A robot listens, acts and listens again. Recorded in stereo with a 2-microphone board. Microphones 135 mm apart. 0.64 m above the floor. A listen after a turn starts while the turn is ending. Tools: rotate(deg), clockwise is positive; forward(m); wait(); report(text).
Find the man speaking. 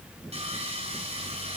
wait()
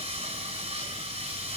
wait()
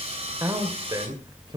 rotate(35)
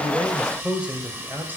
rotate(15)
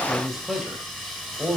rotate(10)
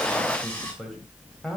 report("Facing the man speaking, 2 to 4 m away.")